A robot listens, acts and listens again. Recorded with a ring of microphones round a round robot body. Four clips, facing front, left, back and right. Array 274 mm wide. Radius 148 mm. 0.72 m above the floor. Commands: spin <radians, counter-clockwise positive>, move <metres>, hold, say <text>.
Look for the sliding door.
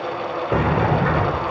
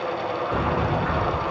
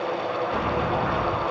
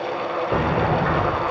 spin -0.44
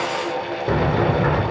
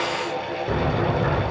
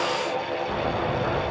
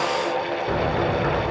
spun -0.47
say Facing the sliding door, 2 to 4 m away.